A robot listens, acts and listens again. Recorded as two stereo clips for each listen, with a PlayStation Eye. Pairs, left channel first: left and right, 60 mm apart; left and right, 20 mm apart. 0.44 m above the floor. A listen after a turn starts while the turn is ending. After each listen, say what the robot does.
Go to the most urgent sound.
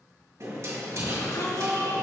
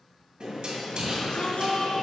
Turn 70° left.
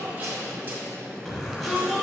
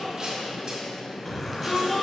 Turn 10° left.
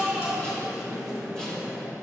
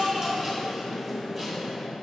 Drive 1.0 m forward.
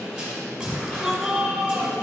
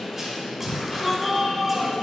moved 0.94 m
Drive 1.0 m forward.
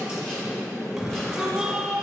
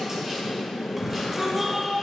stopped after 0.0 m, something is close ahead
I am next to the shout.